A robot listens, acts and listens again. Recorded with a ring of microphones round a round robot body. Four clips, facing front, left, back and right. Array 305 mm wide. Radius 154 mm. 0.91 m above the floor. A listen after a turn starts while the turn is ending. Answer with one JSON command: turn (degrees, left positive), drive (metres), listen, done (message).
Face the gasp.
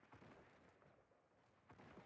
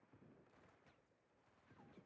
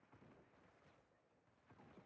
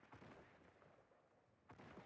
{"listen": true}
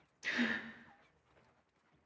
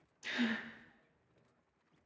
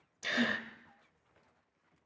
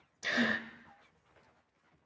{"turn": -130}
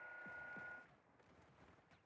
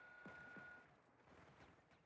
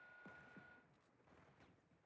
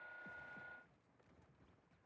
{"done": "I heard a gasp from this way, but can't make it out now."}